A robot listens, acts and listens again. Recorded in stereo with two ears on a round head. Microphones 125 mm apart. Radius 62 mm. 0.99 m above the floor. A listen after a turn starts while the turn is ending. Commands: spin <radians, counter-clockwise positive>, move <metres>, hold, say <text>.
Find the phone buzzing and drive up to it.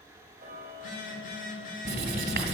spin 0.96
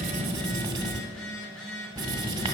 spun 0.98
move 1.0
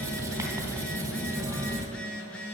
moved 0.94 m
spin 0.17
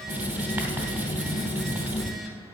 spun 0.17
hold
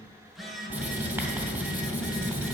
move 1.0
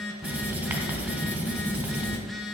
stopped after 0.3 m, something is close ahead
say I am next to the phone buzzing.